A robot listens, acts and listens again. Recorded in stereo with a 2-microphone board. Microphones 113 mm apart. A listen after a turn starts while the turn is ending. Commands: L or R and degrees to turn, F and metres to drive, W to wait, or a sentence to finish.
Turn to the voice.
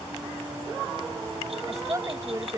R30
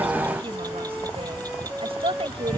R120
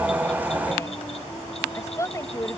L25
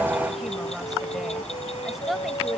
Facing the woman speaking.